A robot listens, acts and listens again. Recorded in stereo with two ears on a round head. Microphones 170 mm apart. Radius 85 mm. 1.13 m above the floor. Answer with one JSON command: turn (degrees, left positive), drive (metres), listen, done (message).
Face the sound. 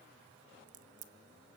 {"turn": -45}
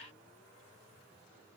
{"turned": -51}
{"listen": true}
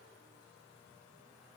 {"done": "I heard a crack, but can't make it out now. It was about 10° left or 85° right."}